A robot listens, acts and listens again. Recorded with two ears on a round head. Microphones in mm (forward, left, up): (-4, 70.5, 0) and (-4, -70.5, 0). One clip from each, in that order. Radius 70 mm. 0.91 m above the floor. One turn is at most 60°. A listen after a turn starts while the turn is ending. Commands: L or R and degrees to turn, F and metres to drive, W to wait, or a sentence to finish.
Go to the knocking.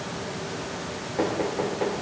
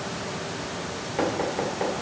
R35
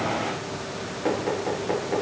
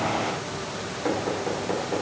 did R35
F1.0
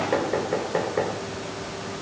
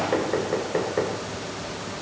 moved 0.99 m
F1.0
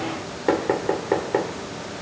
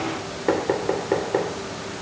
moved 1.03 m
F1.0
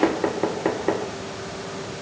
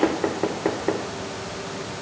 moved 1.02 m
L10
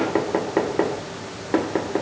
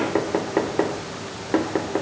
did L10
F1.0
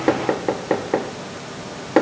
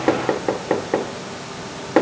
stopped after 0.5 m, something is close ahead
Arrived at the knocking, straight ahead.